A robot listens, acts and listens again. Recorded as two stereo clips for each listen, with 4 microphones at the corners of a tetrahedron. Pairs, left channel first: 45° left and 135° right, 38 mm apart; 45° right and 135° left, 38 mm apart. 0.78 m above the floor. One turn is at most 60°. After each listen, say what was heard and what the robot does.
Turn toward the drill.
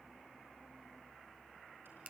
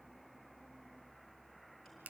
Keep listening.
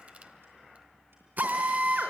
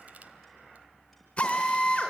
The drill: 100° right. Turn 60° right.
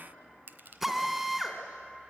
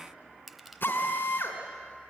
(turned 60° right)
The drill is now 55° right. Turn 55° right.
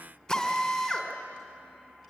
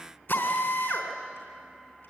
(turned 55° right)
The drill is now 30° right. Turn 30° right.
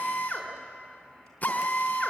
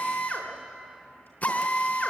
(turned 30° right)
Found it: a drill, straight ahead, 2 to 4 m away.